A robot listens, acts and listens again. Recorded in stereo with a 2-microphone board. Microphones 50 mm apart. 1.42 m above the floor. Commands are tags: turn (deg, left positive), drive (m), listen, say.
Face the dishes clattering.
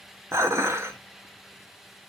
<turn deg="-65"/>
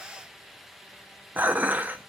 <turn deg="-40"/>
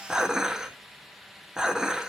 <turn deg="-10"/>
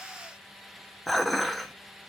<say>Found it: dishes clattering, straight ahead.</say>